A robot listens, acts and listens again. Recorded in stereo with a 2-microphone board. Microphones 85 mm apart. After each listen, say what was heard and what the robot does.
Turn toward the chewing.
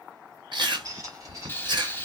The chewing: about 60° right or 120° right. Turn 60° right.
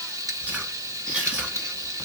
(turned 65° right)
So it is at 20° right. Turn 20° right.
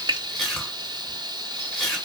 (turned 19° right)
Facing the chewing.